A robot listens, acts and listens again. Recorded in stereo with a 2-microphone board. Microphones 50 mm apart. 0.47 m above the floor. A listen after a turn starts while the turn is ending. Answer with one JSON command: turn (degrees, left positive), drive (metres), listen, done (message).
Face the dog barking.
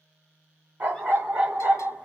{"turn": -25}
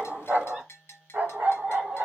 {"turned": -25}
{"turn": -25}
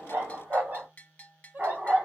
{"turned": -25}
{"turn": -30}
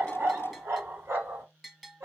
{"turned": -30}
{"turn": -130}
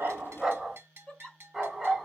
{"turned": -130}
{"done": "Found it: a dog barking, straight ahead."}